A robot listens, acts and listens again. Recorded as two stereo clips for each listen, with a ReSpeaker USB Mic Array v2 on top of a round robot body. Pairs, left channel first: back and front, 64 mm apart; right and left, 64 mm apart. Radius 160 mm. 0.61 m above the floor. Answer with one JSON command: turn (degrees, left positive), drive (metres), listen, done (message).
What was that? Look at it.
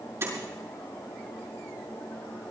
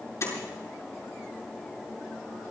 {"turn": -45}
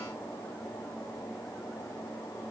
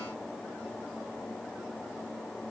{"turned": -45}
{"done": "Facing where the door slam came from. I can't hear it now."}